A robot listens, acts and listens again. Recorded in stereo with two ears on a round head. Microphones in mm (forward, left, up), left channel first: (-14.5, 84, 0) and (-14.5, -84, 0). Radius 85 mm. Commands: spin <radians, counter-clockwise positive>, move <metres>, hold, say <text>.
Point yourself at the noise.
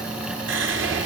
spin -1.13
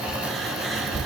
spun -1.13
say Facing the whispering.